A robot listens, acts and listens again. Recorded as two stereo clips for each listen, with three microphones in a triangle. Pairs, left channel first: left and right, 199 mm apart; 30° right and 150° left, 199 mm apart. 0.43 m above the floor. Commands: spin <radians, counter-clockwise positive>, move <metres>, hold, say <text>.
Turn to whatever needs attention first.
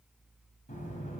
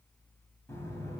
hold
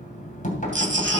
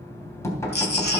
spin -1.13
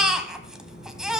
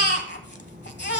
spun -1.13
say Found it: a baby crying, straight ahead, 1 to 2 m away.